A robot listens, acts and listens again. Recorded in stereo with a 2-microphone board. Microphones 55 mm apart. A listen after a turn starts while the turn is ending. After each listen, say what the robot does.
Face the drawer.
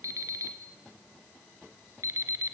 Keep listening.
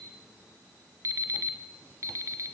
Keep listening.
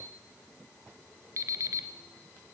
I can't make out a drawer, only an alarm clock.